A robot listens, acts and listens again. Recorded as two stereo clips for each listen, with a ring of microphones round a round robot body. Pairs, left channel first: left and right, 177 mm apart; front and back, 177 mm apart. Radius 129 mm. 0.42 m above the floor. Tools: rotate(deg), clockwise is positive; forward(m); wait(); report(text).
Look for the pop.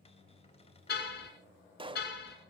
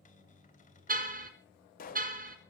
rotate(35)
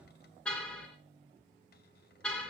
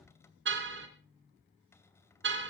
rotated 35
report("Facing where the pop came from. I can't hear it now.")